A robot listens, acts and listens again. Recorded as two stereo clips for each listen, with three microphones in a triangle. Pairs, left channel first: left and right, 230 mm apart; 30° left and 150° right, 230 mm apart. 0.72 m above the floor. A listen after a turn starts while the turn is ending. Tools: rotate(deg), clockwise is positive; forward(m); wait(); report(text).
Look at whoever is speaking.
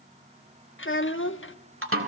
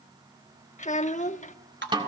rotate(-80)
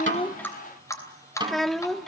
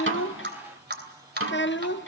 report("Found it: a child speaking, straight ahead, under 1 m away.")